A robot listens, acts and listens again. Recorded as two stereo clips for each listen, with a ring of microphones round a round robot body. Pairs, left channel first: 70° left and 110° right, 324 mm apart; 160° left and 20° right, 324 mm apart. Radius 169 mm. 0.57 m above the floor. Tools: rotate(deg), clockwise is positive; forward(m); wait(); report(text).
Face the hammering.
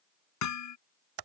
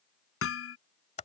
rotate(-105)
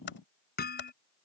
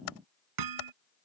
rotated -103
report("Facing the hammering.")